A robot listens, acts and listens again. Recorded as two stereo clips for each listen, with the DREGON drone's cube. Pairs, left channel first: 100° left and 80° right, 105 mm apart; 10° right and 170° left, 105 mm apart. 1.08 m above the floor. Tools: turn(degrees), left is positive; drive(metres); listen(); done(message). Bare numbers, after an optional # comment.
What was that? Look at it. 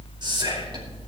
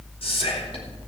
# The whispering: 40° right.
turn(-40)
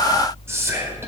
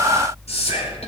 # The whispering is now 15° right.
turn(-15)
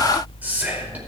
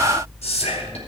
done("Facing the whispering, over 4 m away.")